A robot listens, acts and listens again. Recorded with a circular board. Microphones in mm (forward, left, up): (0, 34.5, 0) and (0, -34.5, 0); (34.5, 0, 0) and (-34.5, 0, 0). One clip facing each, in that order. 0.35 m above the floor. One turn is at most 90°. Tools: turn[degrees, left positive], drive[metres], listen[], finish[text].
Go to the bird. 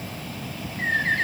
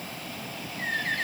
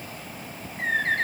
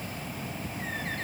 Thought: The bird: 35° left.
Action: turn[35]
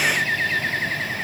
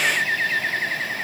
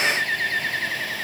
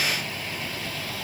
Action: drive[1.0]
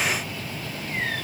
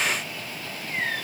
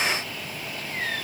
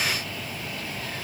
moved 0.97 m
Action: listen[]
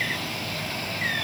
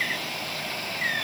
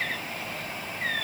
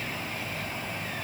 Action: listen[]
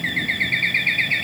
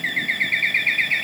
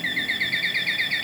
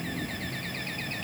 Action: drive[1.0]
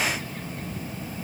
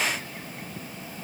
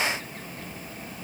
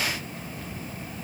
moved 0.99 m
Action: listen[]
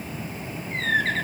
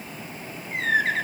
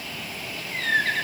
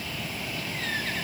Thought: The bird is now 10° right.
Action: turn[-10]
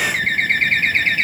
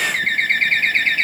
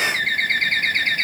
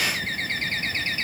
Action: drive[1.0]
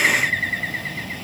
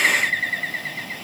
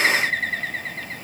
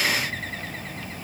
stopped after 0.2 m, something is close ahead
Action: finish[Arrived at the bird, straight ahead.]